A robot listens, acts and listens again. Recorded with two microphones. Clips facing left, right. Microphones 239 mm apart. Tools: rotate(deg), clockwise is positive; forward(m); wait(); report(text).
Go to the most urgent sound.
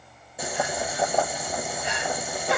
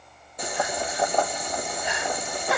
rotate(-25)
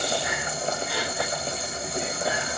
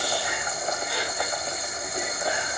forward(1.0)
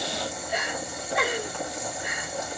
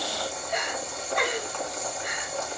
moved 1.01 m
forward(1.0)
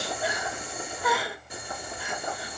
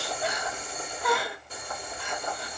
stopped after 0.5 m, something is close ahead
report("I am next to the crying.")